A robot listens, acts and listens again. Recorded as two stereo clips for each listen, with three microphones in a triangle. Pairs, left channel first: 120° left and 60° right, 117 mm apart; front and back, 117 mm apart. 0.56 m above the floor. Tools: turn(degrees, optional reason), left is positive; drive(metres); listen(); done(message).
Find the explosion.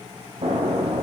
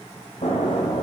turn(degrees=-25, reason="The explosion: 25° right.")
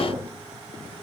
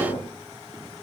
done("Facing the explosion.")